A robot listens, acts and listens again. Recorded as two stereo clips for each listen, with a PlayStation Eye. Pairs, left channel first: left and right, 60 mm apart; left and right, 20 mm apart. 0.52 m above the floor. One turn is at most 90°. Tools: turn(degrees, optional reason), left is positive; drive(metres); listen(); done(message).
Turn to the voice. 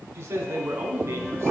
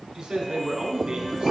turn(degrees=-40, reason="The man speaking: about 40° right or 140° right.")
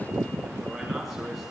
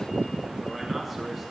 listen()
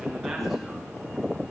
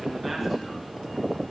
listen()
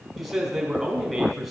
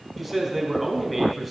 done("Found it: a man speaking, straight ahead.")